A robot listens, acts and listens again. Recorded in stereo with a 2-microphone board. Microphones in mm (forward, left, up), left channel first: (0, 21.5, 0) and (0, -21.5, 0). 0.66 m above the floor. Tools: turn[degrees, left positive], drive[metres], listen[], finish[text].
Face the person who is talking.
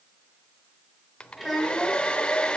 Action: turn[-30]
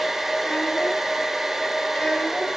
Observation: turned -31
Action: listen[]
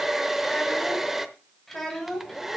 Action: turn[30]
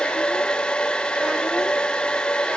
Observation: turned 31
Action: listen[]
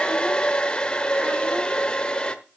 Action: listen[]
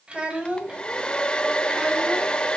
Thought: So it is at 25° right.
Action: turn[-25]
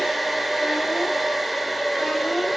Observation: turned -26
Action: listen[]
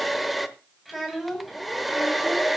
Action: finish[Facing the child speaking.]